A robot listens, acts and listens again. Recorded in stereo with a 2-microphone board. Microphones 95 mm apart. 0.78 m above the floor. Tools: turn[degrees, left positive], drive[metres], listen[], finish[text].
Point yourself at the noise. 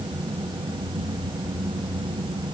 Action: listen[]
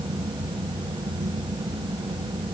Action: listen[]
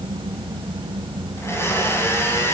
Thought: The blender: about 25° left or 155° left.
Action: turn[25]
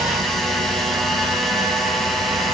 Action: finish[Facing the blender.]